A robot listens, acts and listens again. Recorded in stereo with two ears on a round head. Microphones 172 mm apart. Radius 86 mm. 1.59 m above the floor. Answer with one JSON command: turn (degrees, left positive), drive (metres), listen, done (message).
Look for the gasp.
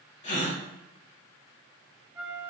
{"turn": 35}
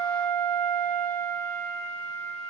{"listen": true}
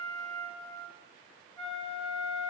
{"done": "I heard a gasp, but can't make it out now. It was about straight ahead or 110° left."}